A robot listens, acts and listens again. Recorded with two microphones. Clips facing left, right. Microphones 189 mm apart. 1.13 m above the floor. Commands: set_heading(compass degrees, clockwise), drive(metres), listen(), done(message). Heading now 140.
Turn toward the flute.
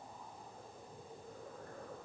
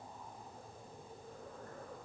listen()
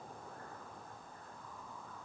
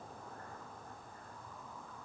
listen()
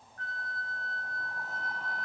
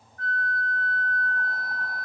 set_heading(50)
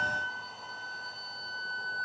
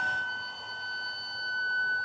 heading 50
done("Found it: a flute, straight ahead.")